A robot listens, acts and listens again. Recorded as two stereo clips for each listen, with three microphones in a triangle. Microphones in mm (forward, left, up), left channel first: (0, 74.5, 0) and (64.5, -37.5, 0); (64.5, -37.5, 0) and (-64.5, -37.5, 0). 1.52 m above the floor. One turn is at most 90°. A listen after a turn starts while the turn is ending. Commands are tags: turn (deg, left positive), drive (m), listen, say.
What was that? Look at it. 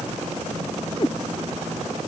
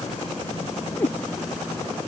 <turn deg="70"/>
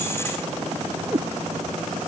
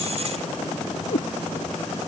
<turn deg="10"/>
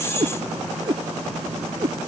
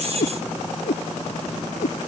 <say>Found it: a cat meowing, straight ahead.</say>